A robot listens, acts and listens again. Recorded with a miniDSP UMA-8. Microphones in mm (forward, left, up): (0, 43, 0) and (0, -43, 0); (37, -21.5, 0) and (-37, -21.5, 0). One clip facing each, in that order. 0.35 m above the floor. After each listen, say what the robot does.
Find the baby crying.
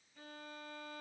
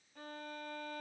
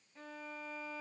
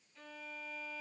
Keep listening.
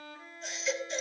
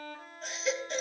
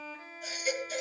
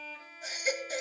Turn 125° right.
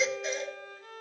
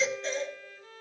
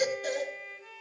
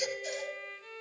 Turn 10° left.
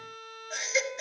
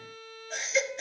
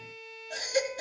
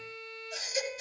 Facing the baby crying, over 4 m away.